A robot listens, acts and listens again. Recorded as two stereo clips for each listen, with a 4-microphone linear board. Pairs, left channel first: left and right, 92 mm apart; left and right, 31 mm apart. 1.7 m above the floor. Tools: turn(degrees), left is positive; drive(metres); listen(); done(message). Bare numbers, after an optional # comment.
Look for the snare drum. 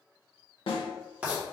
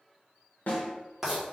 # The snare drum: about 70° left or 110° left.
turn(70)
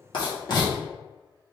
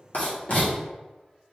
listen()
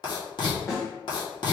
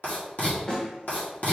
# So it is at 35° left.
turn(35)
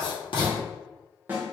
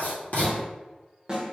# The snare drum is now 20° right.
turn(-20)
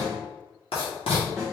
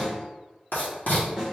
done("Found it: a snare drum, straight ahead.")